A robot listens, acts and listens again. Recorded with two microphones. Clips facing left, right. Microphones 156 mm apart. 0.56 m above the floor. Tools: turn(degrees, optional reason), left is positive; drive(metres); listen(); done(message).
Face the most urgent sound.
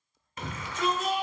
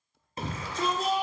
turn(degrees=-35, reason="The shout: about 35° right or 145° right.")
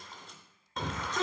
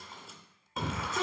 done("Found it: a shout, straight ahead, 1 to 2 m away.")